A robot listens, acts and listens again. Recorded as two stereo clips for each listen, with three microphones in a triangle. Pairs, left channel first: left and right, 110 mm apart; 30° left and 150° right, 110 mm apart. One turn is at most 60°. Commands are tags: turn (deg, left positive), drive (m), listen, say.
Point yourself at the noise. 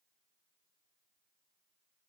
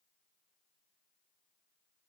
<listen/>
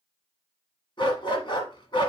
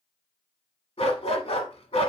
<turn deg="50"/>
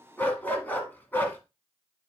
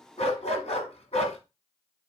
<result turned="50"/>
<turn deg="20"/>
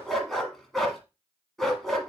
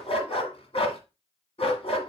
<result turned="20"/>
<say>Found it: a dog barking, straight ahead.</say>